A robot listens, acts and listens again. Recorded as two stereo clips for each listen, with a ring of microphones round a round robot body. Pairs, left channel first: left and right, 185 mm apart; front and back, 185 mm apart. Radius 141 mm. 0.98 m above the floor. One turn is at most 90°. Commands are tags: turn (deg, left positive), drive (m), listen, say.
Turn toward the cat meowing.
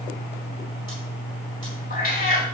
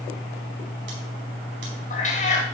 <turn deg="50"/>
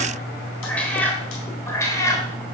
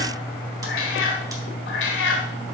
<turn deg="15"/>
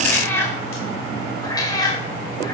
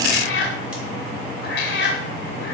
<turn deg="20"/>
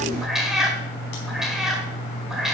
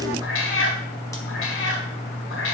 <say>Facing the cat meowing.</say>